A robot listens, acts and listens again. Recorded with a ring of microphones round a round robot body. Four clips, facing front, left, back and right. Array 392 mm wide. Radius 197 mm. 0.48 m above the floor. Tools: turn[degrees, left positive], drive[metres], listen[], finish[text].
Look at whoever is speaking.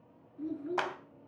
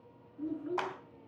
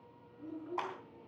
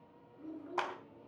Thought: The child speaking: 40° left.
Action: turn[40]
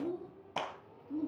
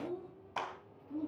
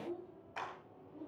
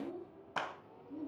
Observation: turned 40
Thought: The child speaking is now 15° left.
Action: turn[15]
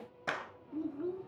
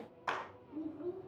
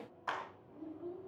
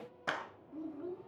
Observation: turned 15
Action: finish[Found it: a child speaking, straight ahead.]